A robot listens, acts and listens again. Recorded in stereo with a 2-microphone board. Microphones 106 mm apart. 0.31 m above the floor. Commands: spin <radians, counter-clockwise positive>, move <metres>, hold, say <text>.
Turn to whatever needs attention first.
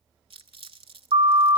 spin -1.22
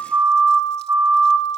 spin -0.52
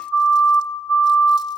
say Facing the siren.